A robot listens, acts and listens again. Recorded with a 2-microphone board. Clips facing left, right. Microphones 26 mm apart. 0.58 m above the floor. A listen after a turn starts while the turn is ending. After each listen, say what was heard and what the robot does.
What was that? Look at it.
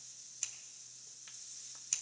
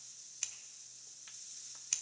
The scissors: about 20° right or 160° right. Turn 20° right.
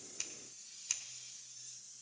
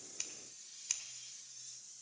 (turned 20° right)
Found it: scissors, straight ahead.